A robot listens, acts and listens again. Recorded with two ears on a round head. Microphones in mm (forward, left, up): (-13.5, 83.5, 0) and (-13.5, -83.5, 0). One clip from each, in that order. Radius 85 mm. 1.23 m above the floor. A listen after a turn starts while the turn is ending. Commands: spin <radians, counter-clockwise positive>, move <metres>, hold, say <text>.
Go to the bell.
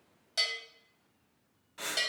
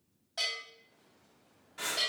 spin 1.05
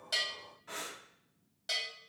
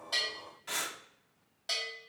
move 1.0
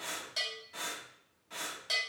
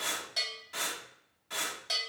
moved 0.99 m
move 1.0
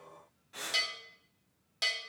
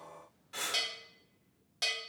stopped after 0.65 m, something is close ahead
spin 0.17
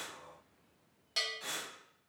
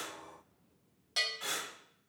say Arrived at the bell, straight ahead.